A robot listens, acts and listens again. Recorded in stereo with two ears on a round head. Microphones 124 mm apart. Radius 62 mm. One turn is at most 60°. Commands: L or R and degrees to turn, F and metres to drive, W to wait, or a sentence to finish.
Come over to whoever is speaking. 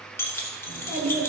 R60
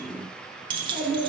R30
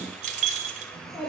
F1.0
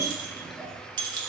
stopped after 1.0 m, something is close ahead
Arrived at the child speaking, straight ahead.